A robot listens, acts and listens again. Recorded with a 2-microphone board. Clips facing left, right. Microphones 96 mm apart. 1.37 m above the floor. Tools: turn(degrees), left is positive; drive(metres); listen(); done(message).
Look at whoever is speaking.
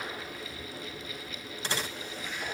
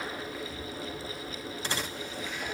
listen()
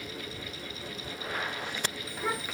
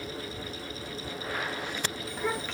turn(degrees=30)
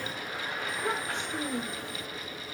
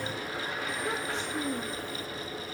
turn(degrees=120)
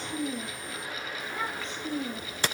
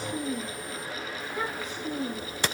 done("Found it: a child speaking, straight ahead, 1 to 2 m away.")